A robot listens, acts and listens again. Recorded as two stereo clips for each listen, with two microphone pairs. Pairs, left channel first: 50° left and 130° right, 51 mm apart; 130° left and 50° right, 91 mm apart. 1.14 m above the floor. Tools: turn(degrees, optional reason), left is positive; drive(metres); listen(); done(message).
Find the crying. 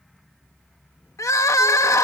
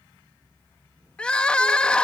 turn(degrees=50, reason="The crying: 50° left.")
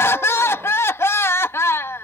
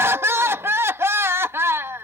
turn(degrees=15, reason="The crying is now 15° left.")
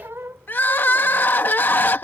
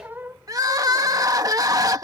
done("Found it: crying, straight ahead.")